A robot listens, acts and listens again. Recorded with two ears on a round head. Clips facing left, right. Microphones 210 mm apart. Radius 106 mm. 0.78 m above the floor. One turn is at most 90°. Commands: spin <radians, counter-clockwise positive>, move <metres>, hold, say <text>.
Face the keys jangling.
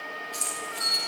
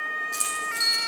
spin -1.13
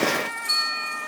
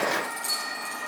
hold
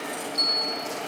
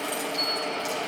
hold
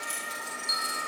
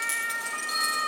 say I heard keys jangling, but can't make it out now. It was about straight ahead or 50° right.